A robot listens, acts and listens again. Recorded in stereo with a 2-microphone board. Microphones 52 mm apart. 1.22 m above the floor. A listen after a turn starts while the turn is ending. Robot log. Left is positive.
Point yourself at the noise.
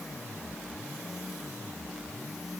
cmd idle
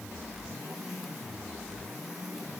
cmd idle
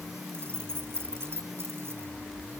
note: The keys jangling: about 50° right or 130° right.
cmd yaw -50
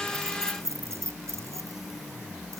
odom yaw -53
note: So it is at 75° right.
cmd yaw -75
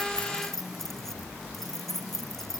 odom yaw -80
end: Found it: keys jangling, straight ahead.